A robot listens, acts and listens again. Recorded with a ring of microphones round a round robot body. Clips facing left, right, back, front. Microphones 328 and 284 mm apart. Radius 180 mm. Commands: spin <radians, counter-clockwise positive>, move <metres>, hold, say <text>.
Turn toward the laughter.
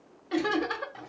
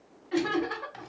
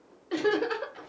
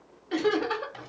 spin 1.66
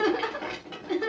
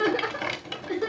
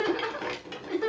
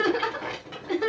spin 0.52
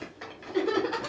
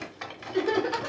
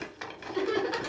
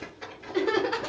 spin 0.26
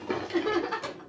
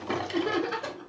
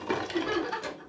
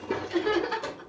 say Facing the laughter.